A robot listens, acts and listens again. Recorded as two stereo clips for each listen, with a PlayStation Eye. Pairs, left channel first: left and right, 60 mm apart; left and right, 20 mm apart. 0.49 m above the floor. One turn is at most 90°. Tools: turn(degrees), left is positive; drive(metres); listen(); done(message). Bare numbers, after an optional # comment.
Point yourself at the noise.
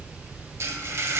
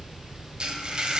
# The frying: about 45° right or 135° right.
turn(-45)
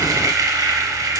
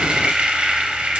# So it is at 85° right.
turn(-85)
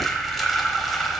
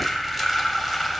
done("Facing the frying.")